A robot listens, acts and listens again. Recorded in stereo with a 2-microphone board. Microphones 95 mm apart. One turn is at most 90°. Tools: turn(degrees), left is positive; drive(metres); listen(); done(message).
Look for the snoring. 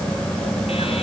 listen()
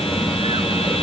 listen()
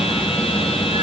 done("I can't make out snoring.")